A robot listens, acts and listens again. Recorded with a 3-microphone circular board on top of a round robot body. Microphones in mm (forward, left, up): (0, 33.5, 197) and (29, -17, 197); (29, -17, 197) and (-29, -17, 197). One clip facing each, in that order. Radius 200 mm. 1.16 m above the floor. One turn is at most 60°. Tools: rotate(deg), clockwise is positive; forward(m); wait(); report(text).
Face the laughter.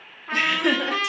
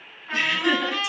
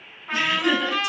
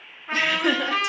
rotate(-60)
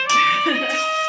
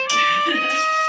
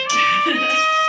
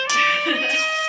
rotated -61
rotate(-60)
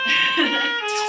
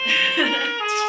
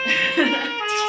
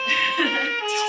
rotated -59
rotate(-25)
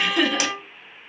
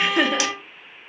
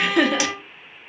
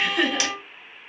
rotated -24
report("Found it: laughter, straight ahead, under 1 m away.")